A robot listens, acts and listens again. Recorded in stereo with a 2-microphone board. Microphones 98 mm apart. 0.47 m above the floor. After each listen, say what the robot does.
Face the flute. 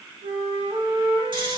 Turn 70° right.
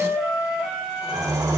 Turn 10° right.
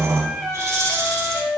Found it: a flute, straight ahead, 1 to 2 m away.